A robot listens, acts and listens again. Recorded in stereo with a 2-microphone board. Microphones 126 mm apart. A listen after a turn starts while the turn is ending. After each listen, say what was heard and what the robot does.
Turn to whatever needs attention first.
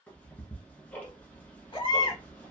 The baby crying: about 40° left or 140° left. Turn 40° left.
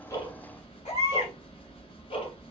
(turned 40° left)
So it is at 100° left. Turn 100° left.
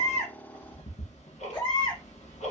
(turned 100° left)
The baby crying is now 40° left. Turn 40° left.
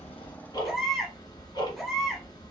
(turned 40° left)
Facing the baby crying.